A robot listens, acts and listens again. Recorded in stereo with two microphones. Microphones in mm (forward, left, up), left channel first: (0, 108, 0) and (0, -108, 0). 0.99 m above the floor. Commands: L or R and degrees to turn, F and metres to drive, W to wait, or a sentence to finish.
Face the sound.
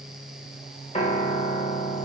L30
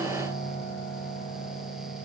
L120
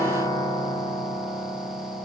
L15
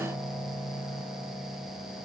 Found it: a piano, straight ahead.